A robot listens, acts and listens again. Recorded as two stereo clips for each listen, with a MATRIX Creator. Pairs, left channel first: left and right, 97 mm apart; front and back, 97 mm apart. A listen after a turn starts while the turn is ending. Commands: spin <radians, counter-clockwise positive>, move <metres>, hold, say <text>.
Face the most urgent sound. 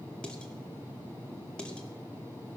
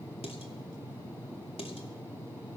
hold
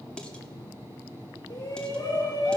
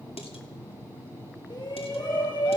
spin 0.70
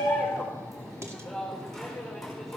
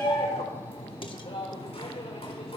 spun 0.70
say Facing the shout, over 4 m away.